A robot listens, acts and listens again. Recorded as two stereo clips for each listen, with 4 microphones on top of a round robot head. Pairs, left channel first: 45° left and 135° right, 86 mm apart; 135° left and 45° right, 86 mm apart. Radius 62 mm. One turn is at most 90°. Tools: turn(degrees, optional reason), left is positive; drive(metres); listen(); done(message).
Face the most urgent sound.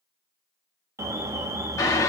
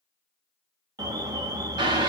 turn(degrees=-85, reason="The alarm: 85° right.")
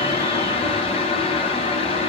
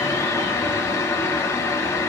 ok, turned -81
listen()
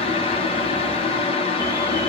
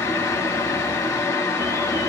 listen()
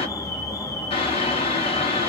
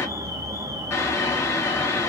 done("Found it: an alarm, straight ahead.")